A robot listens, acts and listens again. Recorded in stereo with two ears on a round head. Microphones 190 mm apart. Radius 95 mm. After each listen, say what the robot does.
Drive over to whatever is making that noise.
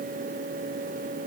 Keep listening.
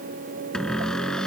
Turn 30° left.
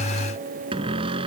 Turn 25° right.
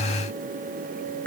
Turn 10° left.
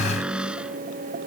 Drive 1.0 m forward.
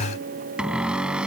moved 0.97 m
Drive 1.0 m forward.
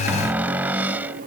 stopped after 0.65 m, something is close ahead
Turn 10° right.
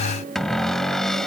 Arrived at the cupboard door, straight ahead.